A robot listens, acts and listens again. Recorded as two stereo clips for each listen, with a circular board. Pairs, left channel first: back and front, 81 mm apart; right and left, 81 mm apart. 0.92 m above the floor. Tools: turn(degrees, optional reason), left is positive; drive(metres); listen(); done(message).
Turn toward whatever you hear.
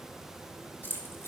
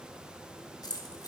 turn(degrees=-120, reason="The keys jangling: 120° right.")
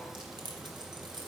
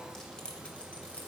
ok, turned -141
turn(degrees=-10, reason="The keys jangling is now 10° right.")
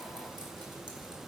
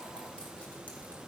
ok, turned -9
listen()
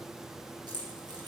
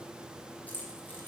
turn(degrees=-20, reason="The keys jangling is now 20° right.")
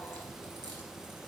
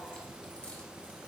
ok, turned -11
turn(degrees=-10, reason="Nothing new. It was at 10° right.")
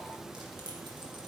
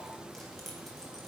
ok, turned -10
listen()
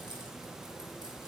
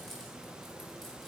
done("I heard keys jangling from this way, but can't make it out now.")